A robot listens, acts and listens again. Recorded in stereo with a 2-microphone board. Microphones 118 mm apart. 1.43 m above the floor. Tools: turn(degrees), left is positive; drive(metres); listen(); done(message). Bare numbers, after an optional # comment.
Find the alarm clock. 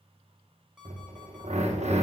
turn(-30)
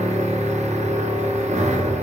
listen()
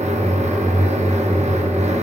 listen()
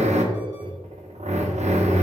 done("I heard an alarm clock, but can't make it out now. It was about 25° left or 145° right.")